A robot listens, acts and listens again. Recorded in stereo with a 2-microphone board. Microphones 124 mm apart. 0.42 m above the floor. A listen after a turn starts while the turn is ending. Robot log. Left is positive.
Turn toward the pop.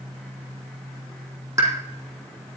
note: The pop: about 30° right or 150° right.
cmd yaw -30
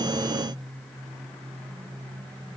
cmd idle
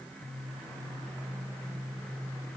end: I heard a pop, but can't make it out now. It was about straight ahead or 120° right.